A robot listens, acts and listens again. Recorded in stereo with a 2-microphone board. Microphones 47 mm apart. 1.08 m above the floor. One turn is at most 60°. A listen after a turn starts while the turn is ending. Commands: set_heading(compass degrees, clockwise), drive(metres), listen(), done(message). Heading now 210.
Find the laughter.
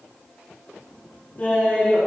set_heading(185)
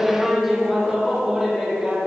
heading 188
set_heading(208)
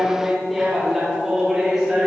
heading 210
set_heading(220)
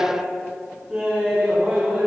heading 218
set_heading(228)
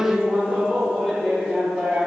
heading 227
done("Facing the laughter.")